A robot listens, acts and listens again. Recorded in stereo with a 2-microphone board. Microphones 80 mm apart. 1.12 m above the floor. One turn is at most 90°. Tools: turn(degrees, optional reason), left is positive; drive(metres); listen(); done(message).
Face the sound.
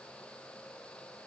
listen()
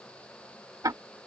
turn(degrees=-50, reason="The ticking: about 50° right or 130° right.")
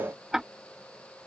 done("Facing the ticking.")